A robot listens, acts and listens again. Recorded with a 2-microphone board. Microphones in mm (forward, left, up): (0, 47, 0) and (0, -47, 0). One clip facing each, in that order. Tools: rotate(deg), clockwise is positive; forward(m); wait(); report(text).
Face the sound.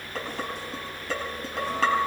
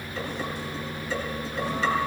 rotate(-90)
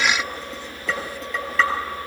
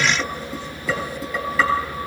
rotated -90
report("Found it: dishes clattering, straight ahead, over 4 m away.")